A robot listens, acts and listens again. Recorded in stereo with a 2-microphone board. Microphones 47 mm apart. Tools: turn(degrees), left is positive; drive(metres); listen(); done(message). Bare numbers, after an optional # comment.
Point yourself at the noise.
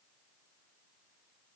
listen()
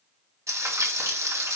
turn(-90)
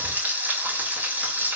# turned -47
# So it is at 35° right.
turn(-35)
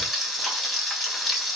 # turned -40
done("Found it: frying, straight ahead, 2 to 4 m away.")